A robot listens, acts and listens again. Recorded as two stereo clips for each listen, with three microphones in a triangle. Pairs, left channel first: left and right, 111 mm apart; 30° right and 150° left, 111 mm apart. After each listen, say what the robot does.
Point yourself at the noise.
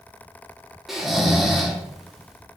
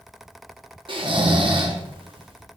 Turn 180° left.
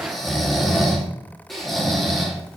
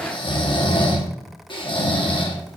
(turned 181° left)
Found it: snoring, straight ahead.